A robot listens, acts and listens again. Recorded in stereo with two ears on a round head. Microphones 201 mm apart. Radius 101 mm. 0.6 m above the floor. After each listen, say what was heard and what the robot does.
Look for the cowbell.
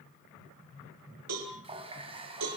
Turn 90° right.
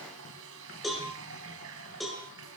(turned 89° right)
Facing the cowbell, over 4 m away.